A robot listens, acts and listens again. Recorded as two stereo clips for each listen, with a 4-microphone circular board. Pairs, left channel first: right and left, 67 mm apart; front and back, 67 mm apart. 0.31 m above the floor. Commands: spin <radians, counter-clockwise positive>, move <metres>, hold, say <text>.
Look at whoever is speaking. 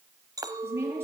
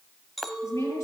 spin 0.61
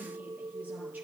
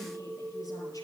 hold
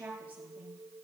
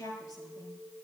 spin 0.44
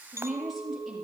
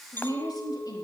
say Facing the woman speaking, over 4 m away.